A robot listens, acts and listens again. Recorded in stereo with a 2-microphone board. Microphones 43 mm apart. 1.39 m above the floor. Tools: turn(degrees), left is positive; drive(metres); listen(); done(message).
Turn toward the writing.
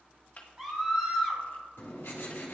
turn(degrees=90)
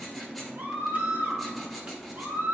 done("Found it: writing, straight ahead.")